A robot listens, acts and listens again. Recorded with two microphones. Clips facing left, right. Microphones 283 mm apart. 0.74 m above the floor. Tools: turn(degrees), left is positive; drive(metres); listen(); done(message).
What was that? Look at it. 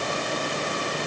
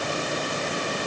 listen()
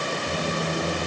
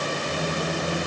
turn(degrees=65)
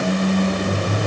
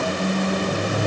turn(degrees=50)
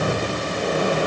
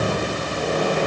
turn(degrees=10)
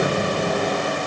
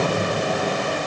done("Found it: a squeak, straight ahead.")